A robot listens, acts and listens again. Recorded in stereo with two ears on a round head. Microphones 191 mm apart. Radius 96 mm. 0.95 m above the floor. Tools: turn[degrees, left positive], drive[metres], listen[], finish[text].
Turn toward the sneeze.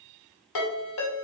Action: listen[]
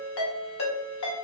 Action: listen[]
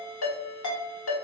Action: finish[I can't make out a sneeze to turn to.]